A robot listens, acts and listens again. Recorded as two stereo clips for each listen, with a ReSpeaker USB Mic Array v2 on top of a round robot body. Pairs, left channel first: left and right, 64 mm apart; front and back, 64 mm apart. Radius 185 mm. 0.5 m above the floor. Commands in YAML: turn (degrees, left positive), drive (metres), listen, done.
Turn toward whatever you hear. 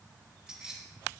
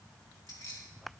turn: -15
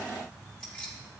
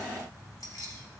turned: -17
turn: 15
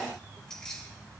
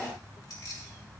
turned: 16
turn: 10
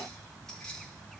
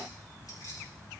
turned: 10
turn: 10
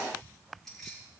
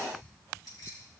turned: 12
done: "Found it: keys jangling, straight ahead, over 4 m away."